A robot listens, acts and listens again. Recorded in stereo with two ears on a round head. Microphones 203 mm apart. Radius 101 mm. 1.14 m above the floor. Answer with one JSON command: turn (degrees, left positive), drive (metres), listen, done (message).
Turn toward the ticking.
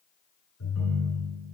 {"listen": true}
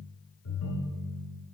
{"listen": true}
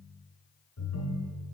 {"done": "I can't make out ticking, only a ringtone."}